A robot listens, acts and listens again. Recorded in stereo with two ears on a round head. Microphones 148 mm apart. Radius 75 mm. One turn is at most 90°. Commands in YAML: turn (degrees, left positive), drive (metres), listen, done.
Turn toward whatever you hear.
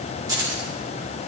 turn: -20
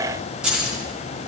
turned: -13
done: "Found it: keys jangling, straight ahead."